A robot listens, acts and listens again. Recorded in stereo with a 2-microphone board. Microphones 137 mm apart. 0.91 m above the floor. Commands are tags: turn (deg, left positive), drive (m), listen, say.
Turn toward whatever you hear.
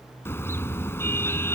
<turn deg="20"/>
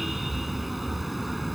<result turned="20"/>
<say>Facing the car horn.</say>